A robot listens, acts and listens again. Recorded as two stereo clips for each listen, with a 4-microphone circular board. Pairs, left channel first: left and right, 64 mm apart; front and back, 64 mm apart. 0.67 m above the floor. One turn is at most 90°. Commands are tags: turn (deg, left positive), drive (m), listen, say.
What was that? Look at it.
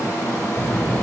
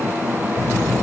<turn deg="30"/>
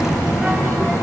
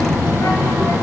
<say>Facing the child speaking, 2 to 4 m away.</say>